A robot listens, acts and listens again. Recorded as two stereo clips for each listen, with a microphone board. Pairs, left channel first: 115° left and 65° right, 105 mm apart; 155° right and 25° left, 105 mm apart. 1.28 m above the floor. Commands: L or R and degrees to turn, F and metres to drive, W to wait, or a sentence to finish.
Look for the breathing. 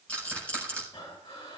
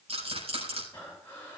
L130
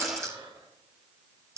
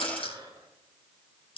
R30
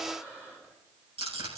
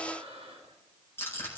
Facing the breathing.